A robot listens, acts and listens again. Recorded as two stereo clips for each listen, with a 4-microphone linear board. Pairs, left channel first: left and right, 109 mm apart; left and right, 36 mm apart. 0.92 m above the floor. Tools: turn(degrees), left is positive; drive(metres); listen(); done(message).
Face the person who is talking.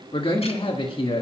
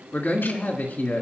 turn(degrees=60)
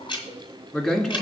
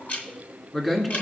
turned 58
turn(degrees=10)
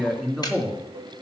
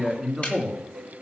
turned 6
done("Facing the man speaking, 1 to 2 m away.")